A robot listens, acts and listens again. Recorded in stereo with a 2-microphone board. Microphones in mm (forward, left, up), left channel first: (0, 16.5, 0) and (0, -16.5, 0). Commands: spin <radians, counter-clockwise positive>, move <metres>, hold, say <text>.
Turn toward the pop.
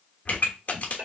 spin 0.87
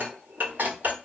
hold
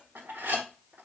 say I heard a pop, but can't make it out now. It was about straight ahead or 80° left.